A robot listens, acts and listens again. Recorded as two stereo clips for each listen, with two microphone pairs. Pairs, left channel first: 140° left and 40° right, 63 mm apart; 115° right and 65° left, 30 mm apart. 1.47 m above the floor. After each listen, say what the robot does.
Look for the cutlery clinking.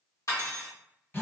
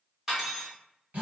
Turn 140° left.
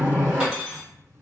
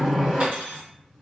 Turn 35° left.
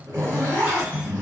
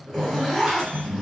Keep listening.
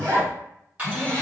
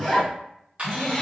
Turn 25° left.
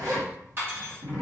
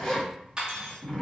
Turn 10° left.
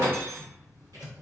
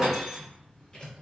Found it: cutlery clinking, straight ahead, 1 to 2 m away.